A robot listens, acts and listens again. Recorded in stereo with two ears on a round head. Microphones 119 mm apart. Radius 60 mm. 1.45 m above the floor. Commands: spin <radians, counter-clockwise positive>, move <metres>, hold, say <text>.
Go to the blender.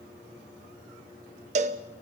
hold
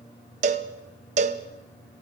hold
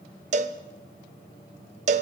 say I can't make out a blender to turn to.